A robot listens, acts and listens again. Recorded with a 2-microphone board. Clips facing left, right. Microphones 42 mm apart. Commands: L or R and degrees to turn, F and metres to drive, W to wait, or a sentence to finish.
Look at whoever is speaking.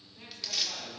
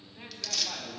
R25
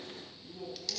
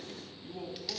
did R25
R120
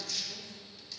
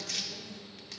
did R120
W
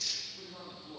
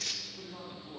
R10
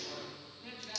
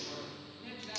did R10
Found it: a man speaking, straight ahead.